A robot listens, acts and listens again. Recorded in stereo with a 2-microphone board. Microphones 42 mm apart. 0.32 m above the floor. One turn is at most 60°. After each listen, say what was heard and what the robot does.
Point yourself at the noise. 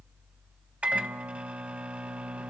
The microwave: about 35° right or 145° right. Turn 35° right.
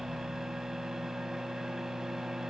Found it: a microwave, straight ahead.